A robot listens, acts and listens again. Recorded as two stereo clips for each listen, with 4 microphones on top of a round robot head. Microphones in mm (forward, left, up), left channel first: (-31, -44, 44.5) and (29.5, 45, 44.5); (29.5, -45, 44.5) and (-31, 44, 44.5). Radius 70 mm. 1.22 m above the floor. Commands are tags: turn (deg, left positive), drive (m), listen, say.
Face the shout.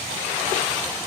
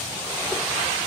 <listen/>
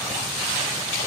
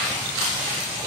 <listen/>
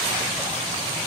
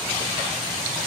<say>I can't make out a shout to turn to.</say>